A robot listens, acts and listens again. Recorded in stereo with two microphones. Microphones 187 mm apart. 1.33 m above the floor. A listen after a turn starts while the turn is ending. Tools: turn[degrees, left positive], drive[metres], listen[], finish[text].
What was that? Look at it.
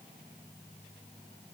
Action: listen[]
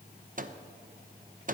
Thought: The microwave: about 45° right or 135° right.
Action: turn[-45]
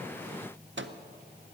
Thought: So it is at 90° right.
Action: turn[-90]
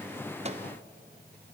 Thought: The microwave is now 35° right.
Action: turn[-35]
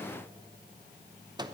Thought: The microwave is now 20° right.
Action: turn[-20]
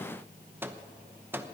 Thought: The microwave is now 10° right.
Action: turn[-10]
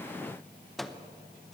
Action: finish[Found it: a microwave, straight ahead.]